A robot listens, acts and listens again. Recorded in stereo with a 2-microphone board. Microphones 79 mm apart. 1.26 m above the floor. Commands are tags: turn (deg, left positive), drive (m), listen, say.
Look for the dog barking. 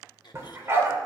<turn deg="-30"/>
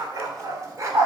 <turn deg="-40"/>
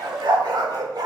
<turn deg="-120"/>
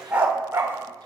<turn deg="-30"/>
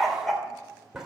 <say>Found it: a dog barking, straight ahead, 2 to 4 m away.</say>